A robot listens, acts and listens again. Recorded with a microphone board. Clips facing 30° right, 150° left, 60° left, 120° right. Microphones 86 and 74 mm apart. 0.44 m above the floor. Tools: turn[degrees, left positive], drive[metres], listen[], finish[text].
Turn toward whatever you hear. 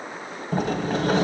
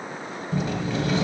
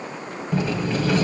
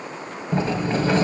Thought: The sliding door: 65° right.
Action: turn[-65]
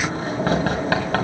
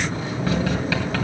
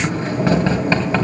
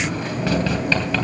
Action: finish[Facing the sliding door, 2 to 4 m away.]